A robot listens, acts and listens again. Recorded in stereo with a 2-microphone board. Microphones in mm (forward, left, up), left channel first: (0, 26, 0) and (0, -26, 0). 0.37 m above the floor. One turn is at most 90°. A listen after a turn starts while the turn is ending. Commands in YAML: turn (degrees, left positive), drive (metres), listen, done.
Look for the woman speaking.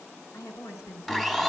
turn: 90
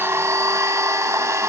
listen: true
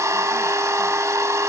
listen: true
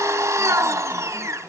done: "Facing where the woman speaking came from. I can't hear it now."